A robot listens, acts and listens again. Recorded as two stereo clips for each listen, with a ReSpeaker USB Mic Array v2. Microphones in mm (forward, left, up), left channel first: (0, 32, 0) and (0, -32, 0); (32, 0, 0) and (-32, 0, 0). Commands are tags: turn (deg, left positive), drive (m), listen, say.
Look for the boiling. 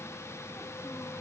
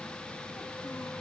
<listen/>
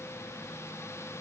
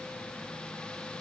<listen/>
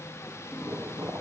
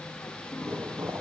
<turn deg="-125"/>
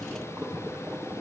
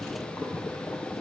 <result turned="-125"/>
<turn deg="-25"/>
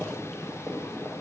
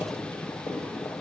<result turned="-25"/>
<say>Facing the boiling, over 4 m away.</say>